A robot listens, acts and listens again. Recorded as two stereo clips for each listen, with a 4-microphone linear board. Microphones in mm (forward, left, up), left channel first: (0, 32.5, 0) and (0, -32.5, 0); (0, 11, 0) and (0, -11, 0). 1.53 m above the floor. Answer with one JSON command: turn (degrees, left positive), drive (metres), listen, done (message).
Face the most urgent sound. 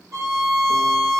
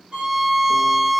{"listen": true}
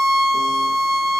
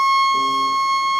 {"listen": true}
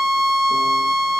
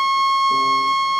{"done": "I can't make out anything urgent to turn to."}